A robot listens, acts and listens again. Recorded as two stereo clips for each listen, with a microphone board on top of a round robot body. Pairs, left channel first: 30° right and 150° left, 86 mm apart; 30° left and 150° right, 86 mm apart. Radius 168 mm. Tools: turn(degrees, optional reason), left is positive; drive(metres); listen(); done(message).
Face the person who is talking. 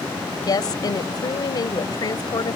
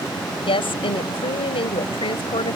turn(degrees=15, reason="The woman speaking: 15° left.")
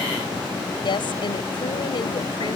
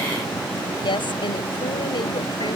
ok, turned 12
done("Facing the woman speaking.")